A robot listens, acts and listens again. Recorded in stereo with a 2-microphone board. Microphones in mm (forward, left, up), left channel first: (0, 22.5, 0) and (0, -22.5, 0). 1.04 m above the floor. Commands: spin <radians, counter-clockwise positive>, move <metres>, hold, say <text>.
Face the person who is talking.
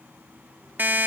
hold
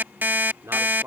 spin -1.31
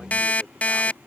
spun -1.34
hold
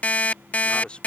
spin 0.35
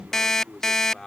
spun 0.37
spin 0.17
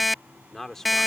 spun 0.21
say Facing the man speaking.